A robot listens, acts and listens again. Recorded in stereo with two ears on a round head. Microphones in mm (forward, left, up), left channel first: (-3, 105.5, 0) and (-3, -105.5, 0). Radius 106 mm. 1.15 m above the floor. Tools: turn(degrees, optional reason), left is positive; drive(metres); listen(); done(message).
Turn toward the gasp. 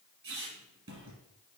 listen()
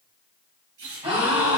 turn(degrees=-25, reason="The gasp: about 25° right or 155° right.")
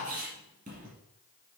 listen()
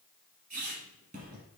done("I heard a gasp, but can't make it out now. It was about straight ahead or 130° right.")